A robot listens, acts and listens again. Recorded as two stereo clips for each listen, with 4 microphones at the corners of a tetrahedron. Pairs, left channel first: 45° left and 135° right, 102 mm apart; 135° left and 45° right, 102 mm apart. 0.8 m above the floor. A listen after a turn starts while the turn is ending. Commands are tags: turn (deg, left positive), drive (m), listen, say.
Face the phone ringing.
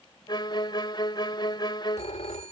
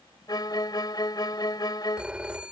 <turn deg="35"/>
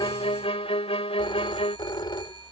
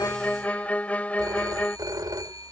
<say>Found it: a phone ringing, straight ahead.</say>